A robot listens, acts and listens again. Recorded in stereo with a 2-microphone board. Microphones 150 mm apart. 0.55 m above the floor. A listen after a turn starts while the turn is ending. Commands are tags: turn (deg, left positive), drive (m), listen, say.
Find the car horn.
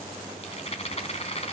<listen/>
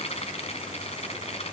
<listen/>
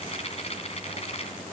<say>I can't make out a car horn to turn to.</say>